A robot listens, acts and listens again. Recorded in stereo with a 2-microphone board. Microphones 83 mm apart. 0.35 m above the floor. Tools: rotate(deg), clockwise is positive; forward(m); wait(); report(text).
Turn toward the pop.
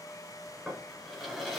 wait()
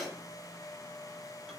wait()
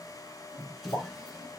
rotate(-70)
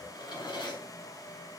wait()
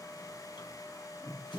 report("I heard a pop, but can't make it out now. It was about straight ahead or 40° left.")